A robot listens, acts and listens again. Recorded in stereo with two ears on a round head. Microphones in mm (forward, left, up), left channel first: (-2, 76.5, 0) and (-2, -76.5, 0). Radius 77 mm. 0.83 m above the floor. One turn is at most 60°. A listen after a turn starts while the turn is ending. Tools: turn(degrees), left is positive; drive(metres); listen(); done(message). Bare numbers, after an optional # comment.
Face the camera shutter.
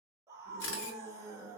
turn(60)
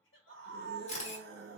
# So it is at 40° left.
turn(40)
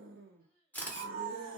# The camera shutter is now 10° left.
turn(10)
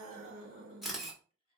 done("Facing the camera shutter, 1 to 2 m away.")